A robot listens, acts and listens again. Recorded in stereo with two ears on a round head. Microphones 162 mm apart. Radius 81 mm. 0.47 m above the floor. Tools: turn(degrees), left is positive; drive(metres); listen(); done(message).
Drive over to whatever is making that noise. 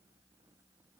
listen()
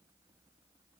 listen()
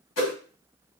turn(degrees=90)
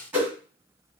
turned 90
turn(degrees=-10)
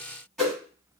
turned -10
drive(metres=1.0)
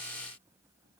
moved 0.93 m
listen()
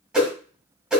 drive(metres=1.0)
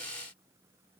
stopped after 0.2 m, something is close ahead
listen()
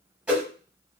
done("I am next to the whoosh.")